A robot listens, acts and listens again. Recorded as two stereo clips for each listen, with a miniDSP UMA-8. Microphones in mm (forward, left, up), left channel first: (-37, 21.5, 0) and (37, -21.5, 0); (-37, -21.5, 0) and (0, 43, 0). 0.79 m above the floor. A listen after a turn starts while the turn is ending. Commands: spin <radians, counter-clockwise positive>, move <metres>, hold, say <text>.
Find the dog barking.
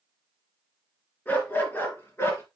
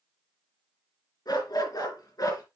spin -2.62
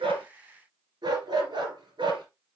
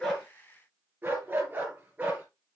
spin -0.17
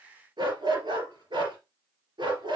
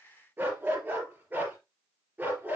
say Found it: a dog barking, straight ahead.